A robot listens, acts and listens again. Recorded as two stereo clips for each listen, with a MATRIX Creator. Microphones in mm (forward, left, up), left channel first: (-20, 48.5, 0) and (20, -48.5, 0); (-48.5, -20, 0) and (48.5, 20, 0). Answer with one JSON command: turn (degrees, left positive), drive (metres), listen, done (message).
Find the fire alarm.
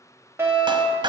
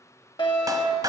{"turn": -130}
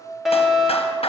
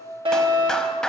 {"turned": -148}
{"turn": 20}
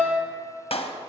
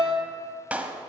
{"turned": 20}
{"done": "Facing the fire alarm."}